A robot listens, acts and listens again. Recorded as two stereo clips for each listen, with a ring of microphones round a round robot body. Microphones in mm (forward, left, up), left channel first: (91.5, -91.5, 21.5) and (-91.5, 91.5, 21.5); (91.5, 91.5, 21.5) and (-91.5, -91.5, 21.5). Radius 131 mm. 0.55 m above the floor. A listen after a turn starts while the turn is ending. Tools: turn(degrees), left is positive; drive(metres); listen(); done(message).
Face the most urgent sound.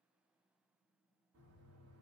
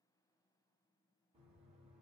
listen()
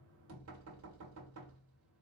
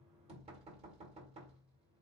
listen()
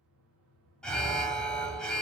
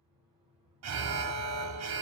turn(degrees=-130)
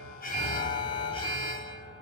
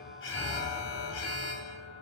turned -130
turn(degrees=25)
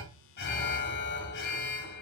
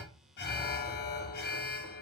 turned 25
done("Found it: an alarm, straight ahead.")